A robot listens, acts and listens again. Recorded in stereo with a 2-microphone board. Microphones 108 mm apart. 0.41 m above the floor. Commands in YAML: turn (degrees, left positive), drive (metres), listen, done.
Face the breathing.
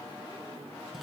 listen: true
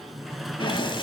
turn: 50
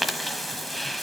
done: "Found it: breathing, straight ahead, 1 to 2 m away."